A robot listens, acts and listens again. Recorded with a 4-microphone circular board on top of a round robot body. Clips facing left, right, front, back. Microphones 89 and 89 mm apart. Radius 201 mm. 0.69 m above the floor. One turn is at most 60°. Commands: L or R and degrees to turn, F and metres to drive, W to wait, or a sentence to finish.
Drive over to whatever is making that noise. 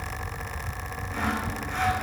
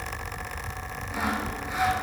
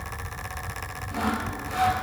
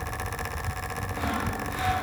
R10
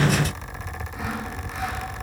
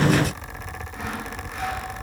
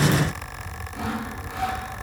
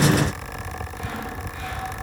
F1.0
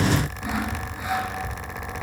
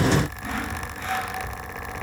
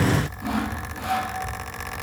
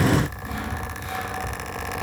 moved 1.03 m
L10
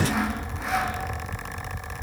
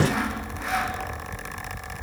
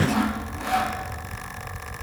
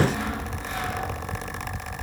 F1.0
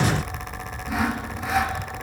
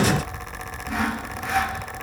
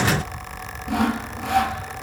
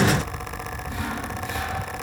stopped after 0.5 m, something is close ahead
Arrived at the sawing, straight ahead.